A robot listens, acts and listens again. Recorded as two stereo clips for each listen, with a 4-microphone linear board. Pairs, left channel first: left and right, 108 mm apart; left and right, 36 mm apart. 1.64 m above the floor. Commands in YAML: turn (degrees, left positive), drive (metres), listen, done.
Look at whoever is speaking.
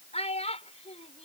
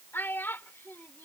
turn: 90
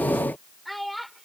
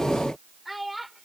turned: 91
done: "Found it: a child speaking, straight ahead."